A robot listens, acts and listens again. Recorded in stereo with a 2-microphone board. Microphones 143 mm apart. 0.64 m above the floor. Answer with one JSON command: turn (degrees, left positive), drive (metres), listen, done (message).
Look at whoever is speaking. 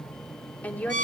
{"turn": 30}
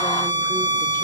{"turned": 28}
{"listen": true}
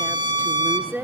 {"turn": -15}
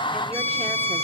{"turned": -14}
{"listen": true}
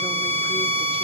{"listen": true}
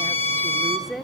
{"done": "Found it: a woman speaking, straight ahead."}